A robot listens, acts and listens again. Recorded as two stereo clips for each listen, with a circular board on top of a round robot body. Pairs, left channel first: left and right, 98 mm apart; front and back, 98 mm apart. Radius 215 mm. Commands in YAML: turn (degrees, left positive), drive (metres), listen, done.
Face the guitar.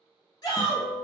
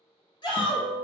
turn: 75
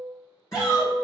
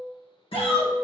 turn: 30
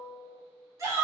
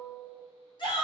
done: "Facing the guitar, 1 to 2 m away."